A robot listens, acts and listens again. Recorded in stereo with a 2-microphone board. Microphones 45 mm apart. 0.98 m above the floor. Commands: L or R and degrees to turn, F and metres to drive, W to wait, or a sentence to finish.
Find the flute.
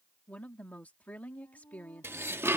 L90
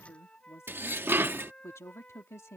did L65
L25
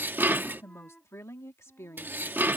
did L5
L15
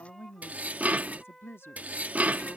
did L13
Facing the flute.